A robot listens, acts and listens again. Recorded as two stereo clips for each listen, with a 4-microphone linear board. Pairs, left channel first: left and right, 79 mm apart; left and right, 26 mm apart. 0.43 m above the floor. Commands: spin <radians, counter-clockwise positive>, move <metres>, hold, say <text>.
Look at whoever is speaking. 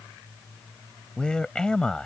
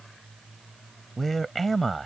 spin 0.52
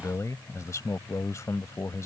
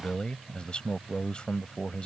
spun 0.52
spin 2.36
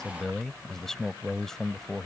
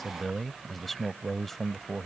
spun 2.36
say Facing the man speaking.